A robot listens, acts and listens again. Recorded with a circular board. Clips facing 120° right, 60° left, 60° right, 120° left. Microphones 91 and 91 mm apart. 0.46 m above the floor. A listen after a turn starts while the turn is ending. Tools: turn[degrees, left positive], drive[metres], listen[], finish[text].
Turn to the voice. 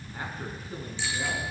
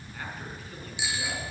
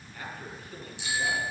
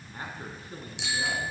Thought: The man speaking: 175° left.
Action: turn[175]
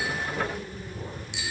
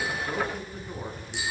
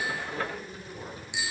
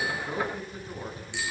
Thought: The man speaking is now 50° left.
Action: turn[50]
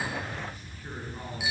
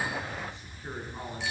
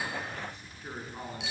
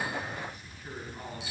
Action: finish[Found it: a man speaking, straight ahead.]